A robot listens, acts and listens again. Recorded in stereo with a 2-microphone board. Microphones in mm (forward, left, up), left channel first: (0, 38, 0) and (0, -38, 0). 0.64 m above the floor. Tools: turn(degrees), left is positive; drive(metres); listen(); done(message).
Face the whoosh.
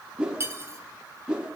turn(degrees=-30)
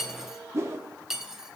turn(degrees=-135)
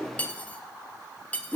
turn(degrees=30)
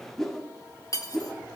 done("Facing the whoosh.")